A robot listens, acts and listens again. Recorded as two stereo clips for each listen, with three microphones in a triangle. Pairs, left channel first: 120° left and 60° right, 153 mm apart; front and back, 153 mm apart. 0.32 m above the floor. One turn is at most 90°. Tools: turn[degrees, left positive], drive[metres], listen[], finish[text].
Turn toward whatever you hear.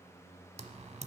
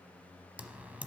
Thought: The typing on a keyboard: 100° right.
Action: turn[-90]
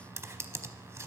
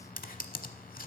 Thought: The typing on a keyboard is now 10° left.
Action: turn[10]
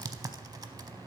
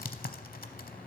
Action: finish[Found it: typing on a keyboard, straight ahead.]